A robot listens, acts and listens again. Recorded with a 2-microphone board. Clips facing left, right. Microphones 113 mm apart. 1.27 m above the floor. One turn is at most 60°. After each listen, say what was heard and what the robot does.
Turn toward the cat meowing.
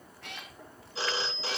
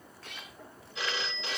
The cat meowing: about 70° left or 110° left. Turn 60° left.
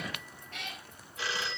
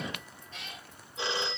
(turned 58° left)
So it is at 60° left. Turn 60° left.
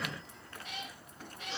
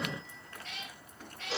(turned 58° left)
The cat meowing is now 15° left. Turn 15° left.
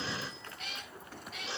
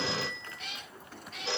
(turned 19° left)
Facing the cat meowing, over 4 m away.